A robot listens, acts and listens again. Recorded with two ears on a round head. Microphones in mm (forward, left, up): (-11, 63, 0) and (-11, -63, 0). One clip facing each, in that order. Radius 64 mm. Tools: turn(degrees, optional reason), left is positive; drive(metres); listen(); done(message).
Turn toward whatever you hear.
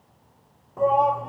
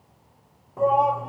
turn(degrees=30)
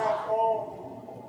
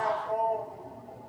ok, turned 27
turn(degrees=155, reason="So it is at 155° left.")
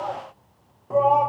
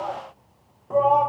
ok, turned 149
done("Found it: a shout, straight ahead, under 1 m away.")